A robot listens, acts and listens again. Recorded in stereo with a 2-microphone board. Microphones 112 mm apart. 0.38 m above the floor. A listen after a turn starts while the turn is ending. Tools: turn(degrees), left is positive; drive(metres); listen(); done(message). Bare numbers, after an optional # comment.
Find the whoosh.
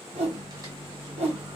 # The whoosh: about 75° right or 105° right.
turn(-75)
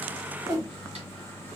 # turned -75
# So it is at 30° right.
turn(-30)
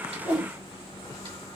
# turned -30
listen()
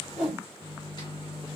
done("Found it: a whoosh, straight ahead.")